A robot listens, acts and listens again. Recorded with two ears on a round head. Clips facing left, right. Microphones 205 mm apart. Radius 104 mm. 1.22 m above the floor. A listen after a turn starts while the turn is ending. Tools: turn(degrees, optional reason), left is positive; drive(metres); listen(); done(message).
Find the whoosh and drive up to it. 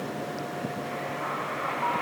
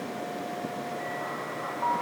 listen()
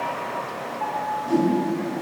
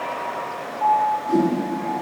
turn(degrees=90)
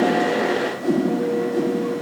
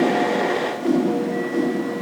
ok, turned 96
turn(degrees=-15, reason="So it is at 15° right.")
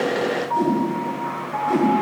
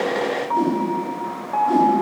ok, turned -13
drive(metres=1.0)
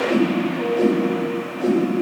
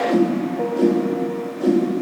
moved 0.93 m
turn(degrees=-10, reason="The whoosh is now 10° right.")
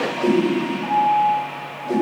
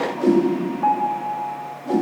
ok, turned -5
drive(metres=1.0)
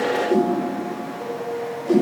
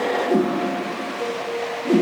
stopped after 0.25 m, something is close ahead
turn(degrees=-10, reason="The whoosh is now 10° right.")
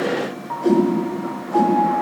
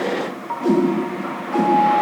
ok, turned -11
done("Arrived at the whoosh, straight ahead.")